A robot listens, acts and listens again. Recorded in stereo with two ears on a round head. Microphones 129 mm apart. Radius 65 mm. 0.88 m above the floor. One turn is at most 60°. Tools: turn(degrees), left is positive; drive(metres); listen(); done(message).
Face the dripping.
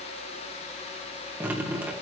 turn(degrees=-30)
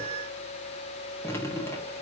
turn(degrees=20)
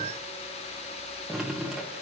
done("Found it: dripping, straight ahead, 1 to 2 m away.")